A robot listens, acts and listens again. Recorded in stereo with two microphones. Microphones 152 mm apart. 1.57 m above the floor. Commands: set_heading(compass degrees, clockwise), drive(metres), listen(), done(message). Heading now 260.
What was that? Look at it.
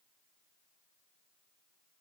listen()
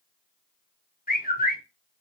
set_heading(190)
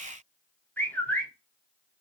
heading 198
set_heading(188)
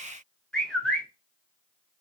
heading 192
done("Facing the bird.")